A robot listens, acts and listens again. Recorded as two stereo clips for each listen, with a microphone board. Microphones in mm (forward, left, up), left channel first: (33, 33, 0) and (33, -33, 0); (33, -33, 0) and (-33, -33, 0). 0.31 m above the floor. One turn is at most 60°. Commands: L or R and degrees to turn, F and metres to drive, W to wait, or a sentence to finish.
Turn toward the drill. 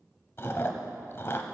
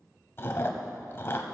W
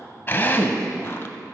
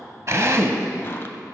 L60
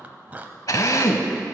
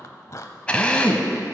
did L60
L60
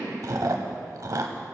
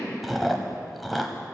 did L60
L10
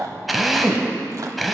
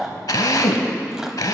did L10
Facing the drill, under 1 m away.